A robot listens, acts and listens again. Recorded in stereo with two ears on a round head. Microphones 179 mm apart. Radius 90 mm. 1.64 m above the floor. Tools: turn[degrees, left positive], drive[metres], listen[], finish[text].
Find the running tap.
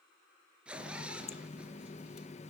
Thought: The running tap: about 35° left or 145° left.
Action: turn[35]
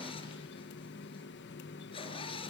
Thought: So it is at 105° left.
Action: turn[105]
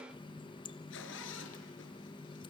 Thought: The running tap is now 25° left.
Action: turn[25]
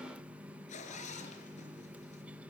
Action: finish[Found it: a running tap, straight ahead, 1 to 2 m away.]